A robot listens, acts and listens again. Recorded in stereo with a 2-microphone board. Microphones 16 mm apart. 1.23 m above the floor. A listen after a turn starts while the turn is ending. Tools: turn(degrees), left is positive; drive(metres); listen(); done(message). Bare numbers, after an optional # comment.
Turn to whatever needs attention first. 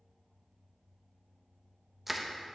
listen()
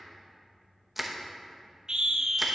# The scream: about 50° right or 130° right.
turn(-50)
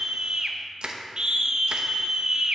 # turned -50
# So it is at 65° right.
turn(-65)
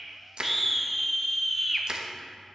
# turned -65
done("Found it: a scream, straight ahead, under 1 m away.")